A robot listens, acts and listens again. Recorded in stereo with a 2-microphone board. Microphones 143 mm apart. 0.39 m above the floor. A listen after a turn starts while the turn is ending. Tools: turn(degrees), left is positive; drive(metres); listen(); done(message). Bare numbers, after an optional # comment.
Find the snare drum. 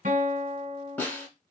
turn(30)
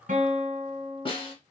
# So it is at 140° left.
turn(140)
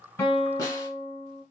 listen()
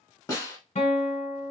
# The snare drum is now 25° left.
turn(25)
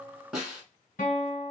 done("Facing the snare drum, 1 to 2 m away.")